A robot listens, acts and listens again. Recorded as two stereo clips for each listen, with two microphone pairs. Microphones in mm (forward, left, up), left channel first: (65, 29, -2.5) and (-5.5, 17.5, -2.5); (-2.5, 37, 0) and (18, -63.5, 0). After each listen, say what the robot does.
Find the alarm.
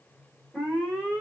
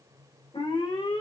Turn 100° left.
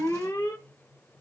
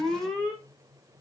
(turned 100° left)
Turn 20° left.
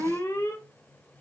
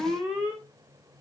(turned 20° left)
Found it: an alarm, straight ahead.